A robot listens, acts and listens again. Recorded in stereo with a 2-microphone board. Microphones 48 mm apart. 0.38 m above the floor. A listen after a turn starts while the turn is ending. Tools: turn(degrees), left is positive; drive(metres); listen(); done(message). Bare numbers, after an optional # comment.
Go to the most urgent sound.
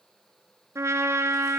listen()
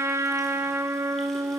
listen()
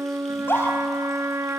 # The scream: about 55° left or 125° left.
turn(55)
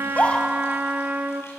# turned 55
listen()
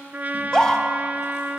# So it is at 20° left.
turn(20)
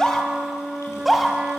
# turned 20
drive(1.0)
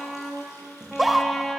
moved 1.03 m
drive(1.0)
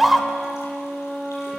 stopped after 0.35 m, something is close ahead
done("I am next to the scream.")